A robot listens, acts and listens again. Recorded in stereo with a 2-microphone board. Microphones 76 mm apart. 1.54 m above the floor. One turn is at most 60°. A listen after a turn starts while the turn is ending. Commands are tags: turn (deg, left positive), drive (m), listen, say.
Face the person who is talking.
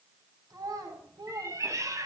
<turn deg="-60"/>
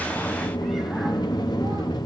<listen/>
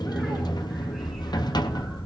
<listen/>
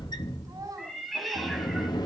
<turn deg="-55"/>
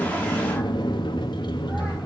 <listen/>
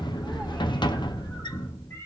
<listen/>
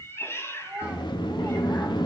<turn deg="-15"/>
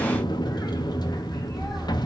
<listen/>
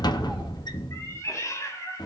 <listen/>
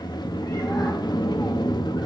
<say>Facing where the child speaking came from. I can't hear it now.</say>